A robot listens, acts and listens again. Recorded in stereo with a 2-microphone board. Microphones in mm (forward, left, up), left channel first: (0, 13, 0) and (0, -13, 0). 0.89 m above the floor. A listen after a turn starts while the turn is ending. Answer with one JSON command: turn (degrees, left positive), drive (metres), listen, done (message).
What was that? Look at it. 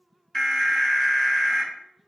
{"turn": 15}
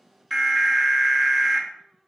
{"done": "Facing the alarm, 2 to 4 m away."}